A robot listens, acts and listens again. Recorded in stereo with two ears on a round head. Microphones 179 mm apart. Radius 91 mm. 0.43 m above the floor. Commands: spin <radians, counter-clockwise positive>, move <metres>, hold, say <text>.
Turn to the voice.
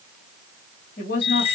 spin 0.79
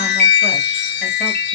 hold
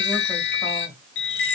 hold
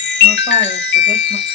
say I heard a woman speaking, but can't make it out now. It was about straight ahead or 90° left.